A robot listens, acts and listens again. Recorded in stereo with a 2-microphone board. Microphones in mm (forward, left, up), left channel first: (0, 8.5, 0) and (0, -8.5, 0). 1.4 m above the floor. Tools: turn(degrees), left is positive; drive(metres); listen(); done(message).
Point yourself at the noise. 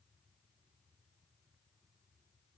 listen()
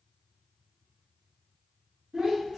turn(degrees=-65)
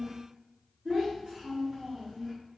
turn(degrees=-55)
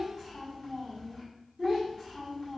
turn(degrees=15)
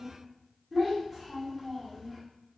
done("Found it: a child speaking, straight ahead.")